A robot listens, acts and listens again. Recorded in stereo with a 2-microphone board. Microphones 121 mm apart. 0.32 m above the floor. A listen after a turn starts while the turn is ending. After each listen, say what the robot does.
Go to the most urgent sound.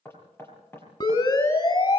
Turn 35° left.
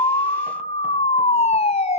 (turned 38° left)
Turn 105° left.
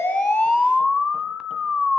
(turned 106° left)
Drive 1.0 m forward.
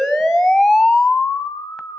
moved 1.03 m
Drive 1.0 m forward.
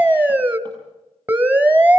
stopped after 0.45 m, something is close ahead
Turn 15° right.
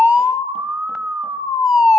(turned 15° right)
Arrived at the siren, straight ahead.